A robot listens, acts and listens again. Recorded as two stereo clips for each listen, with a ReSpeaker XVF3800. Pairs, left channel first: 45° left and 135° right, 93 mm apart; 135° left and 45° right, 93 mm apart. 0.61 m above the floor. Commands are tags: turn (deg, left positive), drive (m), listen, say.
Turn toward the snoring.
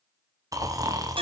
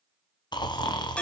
<turn deg="175"/>
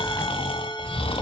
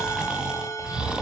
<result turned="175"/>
<turn deg="35"/>
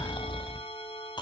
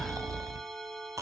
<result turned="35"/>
<turn deg="10"/>
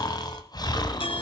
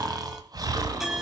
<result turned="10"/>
<say>Found it: snoring, straight ahead.</say>